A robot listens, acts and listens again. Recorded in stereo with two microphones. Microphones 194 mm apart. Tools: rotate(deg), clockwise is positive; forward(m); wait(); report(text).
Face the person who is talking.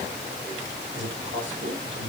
rotate(75)
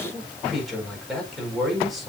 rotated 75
report("Found it: a man speaking, straight ahead.")